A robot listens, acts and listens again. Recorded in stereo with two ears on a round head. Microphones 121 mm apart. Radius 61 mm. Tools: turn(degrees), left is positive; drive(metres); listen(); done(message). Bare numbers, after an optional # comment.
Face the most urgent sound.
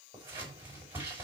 listen()
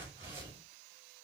listen()
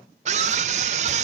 # The scream: about 55° right or 125° right.
turn(-55)
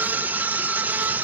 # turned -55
# So it is at 15° right.
turn(-15)
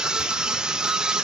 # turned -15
done("Facing the scream.")